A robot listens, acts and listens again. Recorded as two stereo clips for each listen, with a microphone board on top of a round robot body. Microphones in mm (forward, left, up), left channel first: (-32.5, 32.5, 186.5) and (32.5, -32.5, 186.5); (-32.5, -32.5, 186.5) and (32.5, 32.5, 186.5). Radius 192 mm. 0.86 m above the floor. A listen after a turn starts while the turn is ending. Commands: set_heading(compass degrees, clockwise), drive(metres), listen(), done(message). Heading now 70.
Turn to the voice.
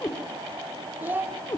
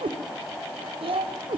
set_heading(45)
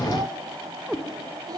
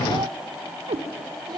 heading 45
done("Facing the child speaking, 1 to 2 m away.")